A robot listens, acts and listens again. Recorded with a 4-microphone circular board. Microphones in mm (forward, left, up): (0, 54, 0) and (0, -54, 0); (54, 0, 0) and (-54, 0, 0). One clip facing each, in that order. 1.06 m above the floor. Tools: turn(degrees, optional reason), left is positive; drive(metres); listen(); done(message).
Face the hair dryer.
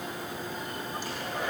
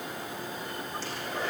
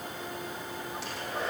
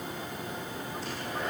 turn(degrees=15, reason="The hair dryer: 15° left.")
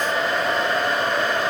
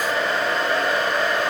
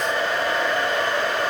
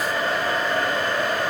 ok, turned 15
done("Facing the hair dryer.")